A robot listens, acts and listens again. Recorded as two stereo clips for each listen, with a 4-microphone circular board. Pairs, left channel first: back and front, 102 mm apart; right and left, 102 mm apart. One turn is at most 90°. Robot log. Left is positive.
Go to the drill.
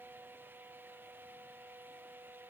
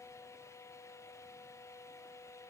cmd idle
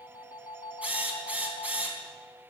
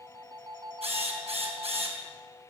note: The drill: 75° left.
cmd yaw +75
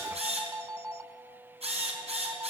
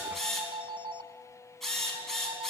cmd fwd 1.0
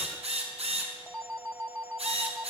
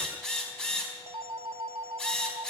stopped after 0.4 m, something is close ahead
end: Something is in my way. I am facing the drill but have not reached it.